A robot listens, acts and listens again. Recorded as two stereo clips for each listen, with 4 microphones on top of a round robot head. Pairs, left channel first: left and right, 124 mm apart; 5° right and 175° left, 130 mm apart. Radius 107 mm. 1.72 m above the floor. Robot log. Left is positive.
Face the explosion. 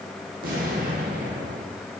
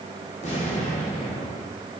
note: The explosion: 60° right.
cmd yaw -60
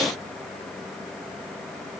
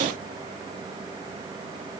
end: Facing where the explosion came from. I can't hear it now.